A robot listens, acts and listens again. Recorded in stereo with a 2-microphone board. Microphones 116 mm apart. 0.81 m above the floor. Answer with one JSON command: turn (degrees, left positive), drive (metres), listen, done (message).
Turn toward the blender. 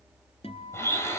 {"turn": 25}
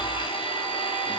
{"turn": 130}
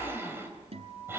{"turn": -20}
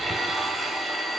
{"done": "Facing the blender."}